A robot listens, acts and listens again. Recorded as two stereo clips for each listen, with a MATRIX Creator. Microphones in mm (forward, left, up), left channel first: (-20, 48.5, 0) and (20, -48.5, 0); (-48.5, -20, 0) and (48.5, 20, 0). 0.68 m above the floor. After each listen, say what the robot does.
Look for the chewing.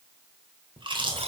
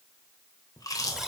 Turn 105° right.
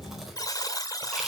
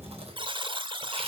Turn 20° left.
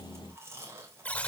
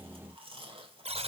Found it: chewing, straight ahead, 2 to 4 m away.